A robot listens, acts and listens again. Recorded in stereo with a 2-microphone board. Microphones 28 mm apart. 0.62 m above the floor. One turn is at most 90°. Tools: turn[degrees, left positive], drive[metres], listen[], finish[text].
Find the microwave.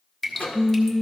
Thought: The microwave: about 65° left or 115° left.
Action: turn[65]
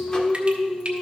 Action: listen[]
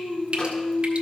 Action: listen[]
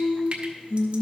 Action: finish[I heard a microwave, but can't make it out now. It was about straight ahead or 50° left.]